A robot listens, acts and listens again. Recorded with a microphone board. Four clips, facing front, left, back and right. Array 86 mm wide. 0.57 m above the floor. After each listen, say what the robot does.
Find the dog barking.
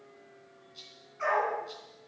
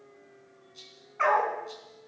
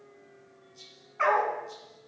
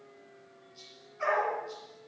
Turn 125° left.
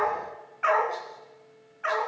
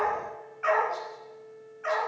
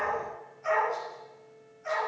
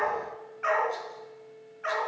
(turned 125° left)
Turn 10° right.
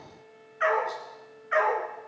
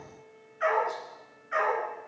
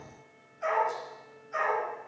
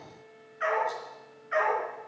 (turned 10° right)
Turn 10° right.
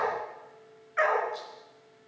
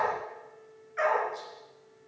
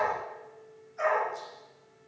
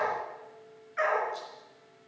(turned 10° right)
Facing the dog barking.